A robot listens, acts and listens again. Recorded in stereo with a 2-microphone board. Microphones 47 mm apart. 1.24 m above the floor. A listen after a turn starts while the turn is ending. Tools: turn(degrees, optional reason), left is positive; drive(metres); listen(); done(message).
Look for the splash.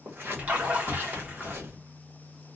turn(degrees=-30, reason="The splash: about 30° right or 150° right.")
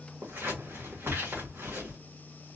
listen()
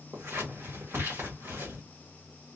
done("I heard a splash, but can't make it out now. It was about straight ahead or 120° right.")